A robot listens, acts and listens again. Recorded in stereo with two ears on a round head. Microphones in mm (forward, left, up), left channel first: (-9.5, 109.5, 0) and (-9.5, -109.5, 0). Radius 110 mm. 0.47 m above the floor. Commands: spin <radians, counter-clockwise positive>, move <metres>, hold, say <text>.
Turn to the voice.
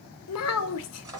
spin 1.13
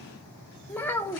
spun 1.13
spin 0.17
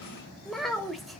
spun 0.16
say Found it: a child speaking, straight ahead.